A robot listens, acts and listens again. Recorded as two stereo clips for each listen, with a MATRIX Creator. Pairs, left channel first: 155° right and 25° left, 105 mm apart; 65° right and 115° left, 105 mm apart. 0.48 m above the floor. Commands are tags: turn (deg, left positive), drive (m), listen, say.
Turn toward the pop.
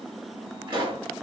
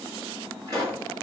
<turn deg="60"/>
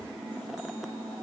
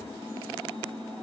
<say>Facing where the pop came from. I can't hear it now.</say>